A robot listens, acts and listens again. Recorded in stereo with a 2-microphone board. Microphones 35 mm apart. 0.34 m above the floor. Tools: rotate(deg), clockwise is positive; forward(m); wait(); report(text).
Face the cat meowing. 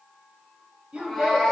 rotate(-30)
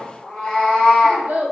rotate(-165)
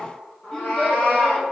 rotate(-60)
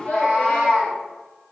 rotate(10)
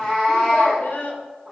report("Facing the cat meowing, 2 to 4 m away.")